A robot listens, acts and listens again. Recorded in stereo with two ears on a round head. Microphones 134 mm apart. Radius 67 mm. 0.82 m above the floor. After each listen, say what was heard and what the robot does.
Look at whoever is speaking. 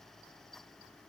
Keep listening.
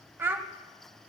Turn 30° right.
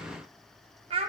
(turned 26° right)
So it is at 140° right. Turn 140° right.
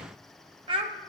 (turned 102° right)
The child speaking is now 35° right. Turn 35° right.
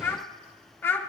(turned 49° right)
The child speaking is now 15° left. Turn 15° left.
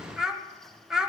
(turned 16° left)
Facing the child speaking.